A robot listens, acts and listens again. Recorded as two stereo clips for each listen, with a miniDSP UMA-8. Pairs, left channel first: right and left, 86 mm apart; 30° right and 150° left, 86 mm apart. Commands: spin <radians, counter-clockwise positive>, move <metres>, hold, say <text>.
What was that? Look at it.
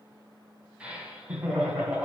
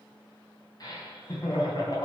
spin 0.26
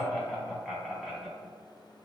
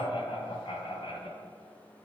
say Found it: laughter, straight ahead.